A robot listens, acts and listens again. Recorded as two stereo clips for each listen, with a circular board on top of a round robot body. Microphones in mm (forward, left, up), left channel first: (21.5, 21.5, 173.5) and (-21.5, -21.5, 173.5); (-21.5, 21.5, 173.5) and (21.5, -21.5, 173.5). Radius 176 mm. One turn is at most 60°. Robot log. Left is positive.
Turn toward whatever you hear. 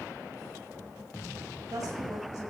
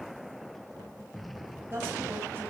note: The woman speaking: 100° right.
cmd yaw -60
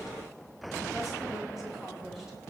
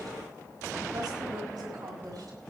note: The woman speaking is now 45° right.
cmd yaw -45
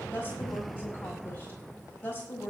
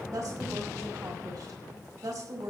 note: The woman speaking is now 15° right.
cmd yaw -15
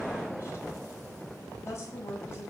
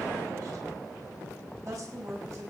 end: Found it: a woman speaking, straight ahead.